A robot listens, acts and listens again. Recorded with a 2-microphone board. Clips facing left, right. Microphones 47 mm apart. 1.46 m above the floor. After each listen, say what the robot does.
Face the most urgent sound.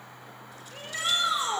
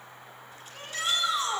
Turn 20° left.
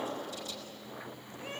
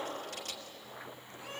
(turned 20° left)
Turn 140° left.
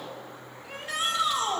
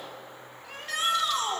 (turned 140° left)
Found it: a shout, straight ahead.